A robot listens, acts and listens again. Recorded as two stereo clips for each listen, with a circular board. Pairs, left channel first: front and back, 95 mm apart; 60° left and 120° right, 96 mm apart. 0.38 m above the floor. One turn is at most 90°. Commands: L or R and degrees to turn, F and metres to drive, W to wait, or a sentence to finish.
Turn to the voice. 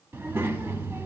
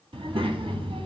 R90
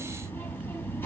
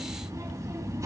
R65
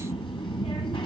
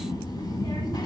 L20
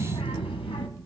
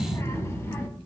Found it: a child speaking, straight ahead.